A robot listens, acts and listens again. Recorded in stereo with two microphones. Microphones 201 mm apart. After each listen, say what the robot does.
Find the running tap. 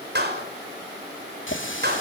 Turn 90° left.
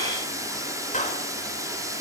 Turn 15° right.
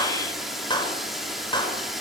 Facing the running tap, 2 to 4 m away.